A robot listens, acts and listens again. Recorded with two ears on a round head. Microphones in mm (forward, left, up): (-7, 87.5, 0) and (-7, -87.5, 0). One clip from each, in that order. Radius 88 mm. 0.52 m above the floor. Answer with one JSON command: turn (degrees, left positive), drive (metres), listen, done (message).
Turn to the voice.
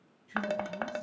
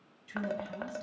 {"turn": -65}
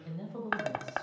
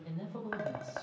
{"turn": -10}
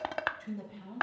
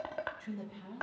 {"done": "Facing the woman speaking, 2 to 4 m away."}